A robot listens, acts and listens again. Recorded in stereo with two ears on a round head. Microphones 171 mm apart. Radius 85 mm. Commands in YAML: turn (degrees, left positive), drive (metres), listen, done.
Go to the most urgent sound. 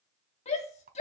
turn: 35
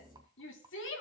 turn: 110
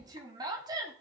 turn: -20
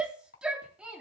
drive: 1.0
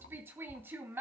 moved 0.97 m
turn: -10
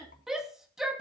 drive: 1.0
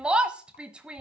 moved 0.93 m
drive: 1.0
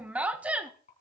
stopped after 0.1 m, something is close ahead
done: "Arrived at the shout, straight ahead."